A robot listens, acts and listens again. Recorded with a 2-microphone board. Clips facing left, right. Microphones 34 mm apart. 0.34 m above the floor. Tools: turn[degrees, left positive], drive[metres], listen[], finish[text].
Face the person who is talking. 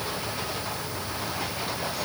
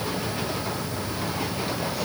Action: listen[]
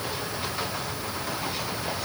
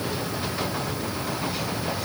Action: listen[]
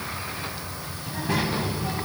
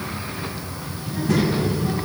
Thought: The child speaking: about 30° left or 150° left.
Action: turn[30]
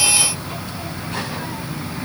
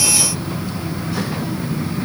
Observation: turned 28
Thought: So it is at 115° left.
Action: turn[115]
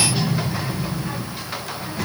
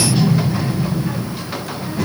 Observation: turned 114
Action: finish[Found it: a child speaking, straight ahead, 2 to 4 m away.]